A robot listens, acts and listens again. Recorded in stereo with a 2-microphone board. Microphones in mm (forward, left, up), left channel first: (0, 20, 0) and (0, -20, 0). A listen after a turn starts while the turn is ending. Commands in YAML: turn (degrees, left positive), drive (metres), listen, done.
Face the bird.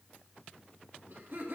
listen: true
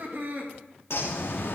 turn: 90
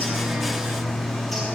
done: "Found it: a bird, straight ahead."